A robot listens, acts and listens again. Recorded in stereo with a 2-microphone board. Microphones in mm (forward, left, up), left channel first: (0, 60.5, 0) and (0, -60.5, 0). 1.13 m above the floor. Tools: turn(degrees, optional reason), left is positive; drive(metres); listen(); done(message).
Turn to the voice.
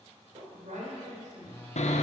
turn(degrees=-90)
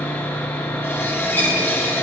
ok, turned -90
listen()
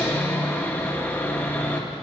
listen()
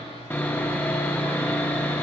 done("I heard a woman speaking from this way, but can't make it out now.")